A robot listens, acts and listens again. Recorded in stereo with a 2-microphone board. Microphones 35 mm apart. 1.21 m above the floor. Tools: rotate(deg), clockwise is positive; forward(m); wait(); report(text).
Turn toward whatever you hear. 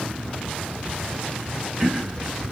rotate(20)
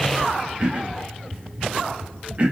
rotate(140)
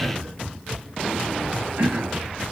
rotate(75)
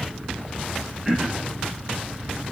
rotate(10)
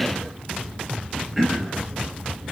report("Facing the throat clearing.")